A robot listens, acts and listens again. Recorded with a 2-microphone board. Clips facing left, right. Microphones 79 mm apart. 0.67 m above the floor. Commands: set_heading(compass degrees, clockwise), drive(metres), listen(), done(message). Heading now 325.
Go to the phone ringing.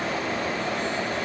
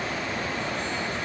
listen()
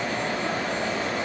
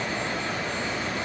listen()
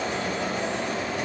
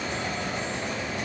done("I can't make out a phone ringing to turn to.")